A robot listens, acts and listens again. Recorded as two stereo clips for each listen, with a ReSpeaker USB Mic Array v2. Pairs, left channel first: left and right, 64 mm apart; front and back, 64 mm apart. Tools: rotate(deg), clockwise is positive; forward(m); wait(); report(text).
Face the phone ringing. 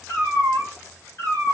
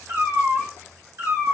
wait()
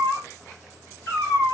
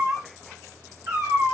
wait()
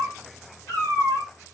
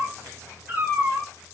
report("I can't make out a phone ringing to turn to.")